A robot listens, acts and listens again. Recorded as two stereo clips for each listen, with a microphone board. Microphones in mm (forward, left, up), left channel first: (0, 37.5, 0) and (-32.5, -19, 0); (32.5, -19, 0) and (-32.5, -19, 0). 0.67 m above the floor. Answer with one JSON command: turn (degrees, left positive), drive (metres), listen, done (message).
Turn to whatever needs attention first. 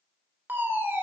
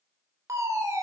{"turn": -170}
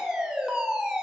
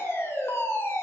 {"turn": -45}
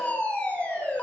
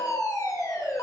{"done": "Facing the fire alarm, 2 to 4 m away."}